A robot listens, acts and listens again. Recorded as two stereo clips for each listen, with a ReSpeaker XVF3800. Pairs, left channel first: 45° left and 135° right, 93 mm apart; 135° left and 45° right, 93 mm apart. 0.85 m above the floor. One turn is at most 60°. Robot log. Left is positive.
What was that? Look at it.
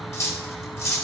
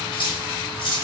note: The cutlery clinking: 105° left.
cmd yaw +60
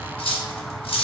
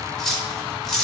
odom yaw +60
note: The cutlery clinking is now 50° left.
cmd yaw +50
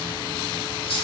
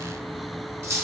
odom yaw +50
note: The cutlery clinking is now 15° left.
cmd yaw +15
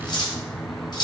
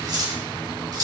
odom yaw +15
end: Found it: cutlery clinking, straight ahead.